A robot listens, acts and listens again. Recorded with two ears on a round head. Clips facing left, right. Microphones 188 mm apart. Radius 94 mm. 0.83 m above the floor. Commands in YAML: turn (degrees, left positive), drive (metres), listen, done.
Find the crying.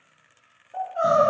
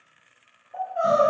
turn: 30
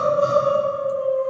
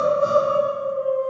turn: 135
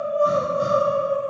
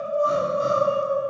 turn: 20
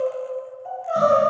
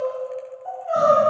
done: "Found it: crying, straight ahead."